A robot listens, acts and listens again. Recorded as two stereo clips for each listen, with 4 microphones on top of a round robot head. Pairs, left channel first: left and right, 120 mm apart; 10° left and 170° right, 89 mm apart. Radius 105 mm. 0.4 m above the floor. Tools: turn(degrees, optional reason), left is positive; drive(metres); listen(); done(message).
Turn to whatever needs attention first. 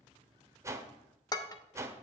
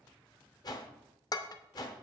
listen()
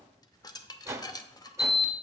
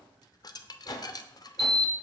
turn(degrees=180, reason="The alarm: straight behind.")
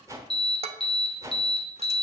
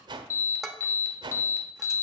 turn(degrees=55, reason="The alarm is now 55° left.")
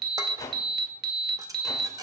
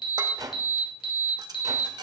done("Facing the alarm, 2 to 4 m away.")